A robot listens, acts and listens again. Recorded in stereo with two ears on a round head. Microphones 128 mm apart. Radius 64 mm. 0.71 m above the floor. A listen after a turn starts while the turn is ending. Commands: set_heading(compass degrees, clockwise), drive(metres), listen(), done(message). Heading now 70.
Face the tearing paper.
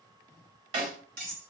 listen()
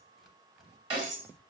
set_heading(40)
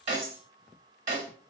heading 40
listen()
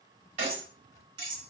listen()
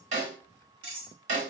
done("I heard tearing paper, but can't make it out now. It was about 30° right or 150° left.")